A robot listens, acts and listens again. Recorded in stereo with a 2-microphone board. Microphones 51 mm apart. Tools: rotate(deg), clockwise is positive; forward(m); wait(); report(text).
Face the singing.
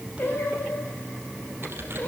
rotate(-40)
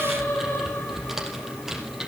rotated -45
rotate(-105)
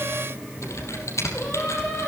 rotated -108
rotate(-15)
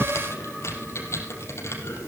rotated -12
wait()
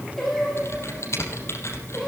report("Found it: singing, straight ahead, over 4 m away.")